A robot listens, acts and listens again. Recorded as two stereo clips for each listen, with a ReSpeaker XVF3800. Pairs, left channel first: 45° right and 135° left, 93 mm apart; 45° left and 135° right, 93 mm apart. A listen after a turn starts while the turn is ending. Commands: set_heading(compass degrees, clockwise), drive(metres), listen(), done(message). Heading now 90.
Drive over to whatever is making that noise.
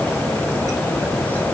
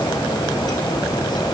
listen()
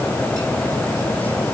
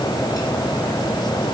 listen()
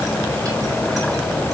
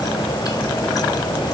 done("I can't make out anything to turn to.")